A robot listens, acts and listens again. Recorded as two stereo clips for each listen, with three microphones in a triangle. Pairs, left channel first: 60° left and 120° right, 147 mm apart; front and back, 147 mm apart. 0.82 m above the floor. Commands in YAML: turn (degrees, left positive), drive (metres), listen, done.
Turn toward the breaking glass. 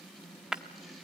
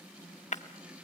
turn: -35
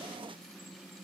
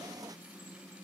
done: "Facing where the breaking glass came from. I can't hear it now."